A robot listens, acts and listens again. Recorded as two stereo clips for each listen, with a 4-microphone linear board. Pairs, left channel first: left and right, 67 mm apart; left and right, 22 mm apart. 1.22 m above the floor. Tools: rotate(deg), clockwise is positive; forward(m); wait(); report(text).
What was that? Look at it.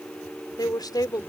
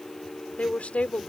rotate(-75)
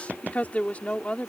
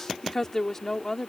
rotate(-20)
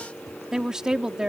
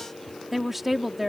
rotate(10)
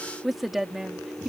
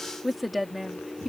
report("Facing the woman speaking.")